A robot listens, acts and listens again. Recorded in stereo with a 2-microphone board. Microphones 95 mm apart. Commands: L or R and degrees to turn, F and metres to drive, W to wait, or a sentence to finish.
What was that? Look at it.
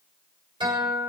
R60
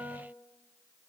R45
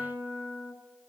R20
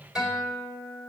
Found it: a guitar, straight ahead.